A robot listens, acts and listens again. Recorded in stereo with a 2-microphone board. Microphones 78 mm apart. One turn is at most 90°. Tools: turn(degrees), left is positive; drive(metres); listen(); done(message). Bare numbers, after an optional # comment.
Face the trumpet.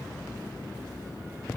listen()
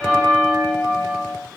listen()
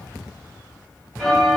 done("I can't make out a trumpet to turn to.")